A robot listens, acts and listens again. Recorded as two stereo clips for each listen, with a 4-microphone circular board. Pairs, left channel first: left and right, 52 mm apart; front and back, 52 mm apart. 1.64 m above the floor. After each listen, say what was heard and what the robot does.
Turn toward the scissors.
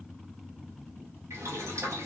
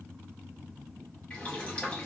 Keep listening.
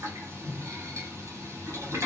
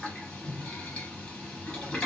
Keep listening.
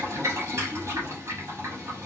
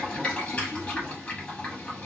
I can't make out scissors to turn to.